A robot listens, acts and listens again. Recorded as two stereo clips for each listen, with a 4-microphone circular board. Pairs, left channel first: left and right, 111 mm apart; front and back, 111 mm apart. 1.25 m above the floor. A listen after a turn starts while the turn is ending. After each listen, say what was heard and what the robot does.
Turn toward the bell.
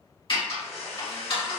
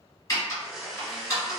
Keep listening.
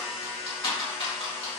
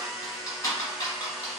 Keep listening.
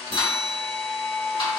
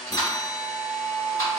The bell: 60° right. Turn 60° right.
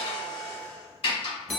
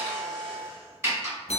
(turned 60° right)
Found it: a bell, straight ahead, under 1 m away.